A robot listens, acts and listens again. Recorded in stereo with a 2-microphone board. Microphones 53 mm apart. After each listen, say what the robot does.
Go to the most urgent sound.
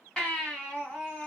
Turn 15° left.
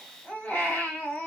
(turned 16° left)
Turn 150° left.
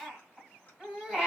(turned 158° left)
Turn 10° right.
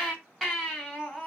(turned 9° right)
Drive 1.0 m forward.
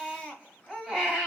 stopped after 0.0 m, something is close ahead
Turn 10° right.
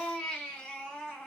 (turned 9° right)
Blocked. The baby crying is further on, straight ahead.